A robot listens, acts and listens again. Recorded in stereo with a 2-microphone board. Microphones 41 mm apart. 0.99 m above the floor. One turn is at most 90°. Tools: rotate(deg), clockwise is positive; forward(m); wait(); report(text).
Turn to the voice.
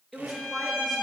rotate(-30)
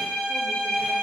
wait()
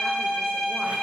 wait()
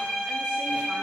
report("I heard a woman speaking, but can't make it out now. It was about 30° right or 150° left.")